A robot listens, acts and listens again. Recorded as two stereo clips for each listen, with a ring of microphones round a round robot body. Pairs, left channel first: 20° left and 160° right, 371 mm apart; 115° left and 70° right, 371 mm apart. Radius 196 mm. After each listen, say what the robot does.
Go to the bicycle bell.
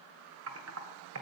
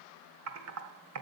Keep listening.
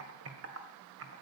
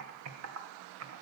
Keep listening.
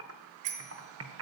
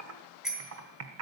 Turn 155° right.
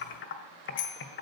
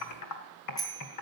Turn 30° left.
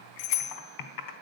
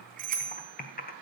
Drive 1.0 m forward.
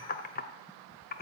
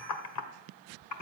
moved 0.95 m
Keep listening.
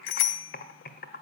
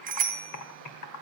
Drive 1.0 m forward.
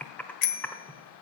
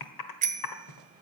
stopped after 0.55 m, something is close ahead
I am next to the bicycle bell.